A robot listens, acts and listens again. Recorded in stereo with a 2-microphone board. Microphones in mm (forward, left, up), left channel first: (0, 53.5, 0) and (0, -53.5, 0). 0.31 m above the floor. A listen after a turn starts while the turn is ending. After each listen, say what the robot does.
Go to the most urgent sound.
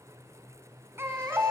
Turn 25° right.
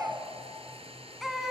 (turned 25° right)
Drive 1.0 m forward.
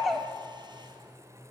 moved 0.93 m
Drive 1.0 m forward.
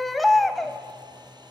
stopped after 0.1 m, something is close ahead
Arrived at the baby crying, straight ahead.